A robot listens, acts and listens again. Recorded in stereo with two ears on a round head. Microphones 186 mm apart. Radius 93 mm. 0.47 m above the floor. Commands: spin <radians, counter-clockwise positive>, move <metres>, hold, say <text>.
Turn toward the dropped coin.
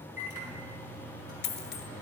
spin 0.87
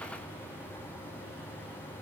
hold
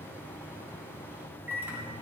say I heard a dropped coin, but can't make it out now. It was about straight ahead or 80° left.